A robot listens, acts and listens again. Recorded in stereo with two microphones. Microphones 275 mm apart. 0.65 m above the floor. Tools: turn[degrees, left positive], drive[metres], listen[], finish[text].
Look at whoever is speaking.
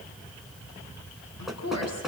Thought: The woman speaking: about 65° left or 115° left.
Action: turn[65]
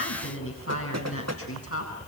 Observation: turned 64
Thought: So it is at 55° left.
Action: turn[55]
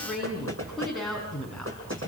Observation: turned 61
Action: finish[Found it: a woman speaking, straight ahead.]